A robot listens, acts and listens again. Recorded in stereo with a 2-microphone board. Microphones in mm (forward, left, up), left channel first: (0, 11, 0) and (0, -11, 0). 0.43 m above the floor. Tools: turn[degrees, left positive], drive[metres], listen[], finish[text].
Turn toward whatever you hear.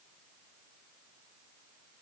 Action: listen[]
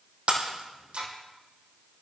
Thought: The breaking glass: about 60° right or 120° right.
Action: turn[-60]
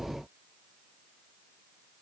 Action: listen[]
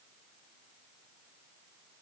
Action: finish[I heard breaking glass, but can't make it out now. It was about straight ahead or 60° right.]